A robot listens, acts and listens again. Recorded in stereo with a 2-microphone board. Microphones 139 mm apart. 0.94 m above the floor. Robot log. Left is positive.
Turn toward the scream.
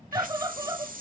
note: The scream: about 25° right or 155° right.
cmd yaw -25
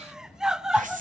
end: Facing the scream, under 1 m away.